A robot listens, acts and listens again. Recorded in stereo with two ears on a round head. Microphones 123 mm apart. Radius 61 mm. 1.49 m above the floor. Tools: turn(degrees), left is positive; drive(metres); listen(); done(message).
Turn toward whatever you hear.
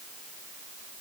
listen()
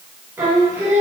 turn(degrees=-15)
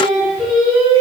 done("Found it: singing, straight ahead, 2 to 4 m away.")